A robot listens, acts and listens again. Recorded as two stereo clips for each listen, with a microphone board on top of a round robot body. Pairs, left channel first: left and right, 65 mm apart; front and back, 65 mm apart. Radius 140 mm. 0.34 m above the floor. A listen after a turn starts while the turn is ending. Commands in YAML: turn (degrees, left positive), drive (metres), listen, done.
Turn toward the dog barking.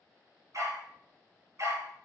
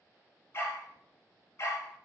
turn: -45
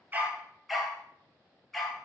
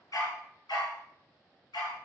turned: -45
done: "Found it: a dog barking, straight ahead."